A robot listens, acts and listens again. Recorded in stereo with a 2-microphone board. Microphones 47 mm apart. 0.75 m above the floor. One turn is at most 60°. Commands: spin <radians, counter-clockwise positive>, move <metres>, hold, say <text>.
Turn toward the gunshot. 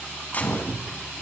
spin 0.61
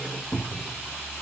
hold
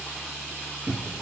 say I heard a gunshot, but can't make it out now. It was about straight ahead or 110° left.